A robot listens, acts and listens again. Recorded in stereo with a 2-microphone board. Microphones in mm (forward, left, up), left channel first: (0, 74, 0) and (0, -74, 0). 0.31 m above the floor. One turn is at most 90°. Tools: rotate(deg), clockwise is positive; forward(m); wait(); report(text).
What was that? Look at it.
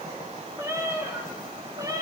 rotate(25)
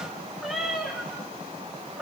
report("Facing the cat meowing.")